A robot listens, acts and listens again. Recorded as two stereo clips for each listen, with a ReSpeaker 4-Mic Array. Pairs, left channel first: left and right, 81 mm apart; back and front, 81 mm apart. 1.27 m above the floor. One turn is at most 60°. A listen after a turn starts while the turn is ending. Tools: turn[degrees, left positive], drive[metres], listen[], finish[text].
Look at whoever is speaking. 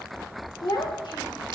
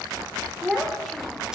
Thought: The child speaking: 90° left.
Action: turn[60]
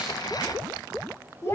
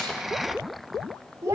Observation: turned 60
Thought: The child speaking is now 40° left.
Action: turn[40]
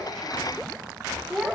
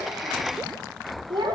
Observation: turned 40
Action: finish[Facing the child speaking, 2 to 4 m away.]